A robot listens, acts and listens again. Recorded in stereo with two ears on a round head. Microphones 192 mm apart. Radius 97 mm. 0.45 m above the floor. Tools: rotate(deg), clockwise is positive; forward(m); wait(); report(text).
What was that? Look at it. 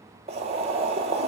rotate(30)
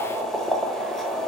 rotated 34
report("Facing the boiling.")